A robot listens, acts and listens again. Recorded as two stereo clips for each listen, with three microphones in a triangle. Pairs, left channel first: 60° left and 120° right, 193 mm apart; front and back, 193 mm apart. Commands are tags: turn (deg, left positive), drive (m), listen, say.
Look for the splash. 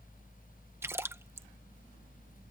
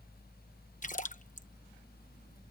<turn deg="-45"/>
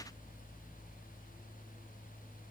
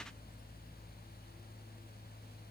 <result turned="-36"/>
<say>I heard a splash from this way, but can't make it out now.</say>